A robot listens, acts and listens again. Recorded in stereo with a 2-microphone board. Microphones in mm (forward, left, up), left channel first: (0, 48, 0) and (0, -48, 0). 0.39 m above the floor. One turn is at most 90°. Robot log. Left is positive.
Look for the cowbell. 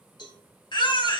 note: The cowbell: about 50° left or 130° left.
cmd yaw +50
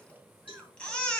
note: So it is at 75° left.
cmd yaw +75
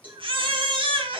note: The cowbell is now 20° right.
cmd yaw -20
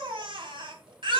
cmd idle
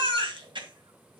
cmd idle
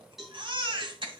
end: Facing the cowbell.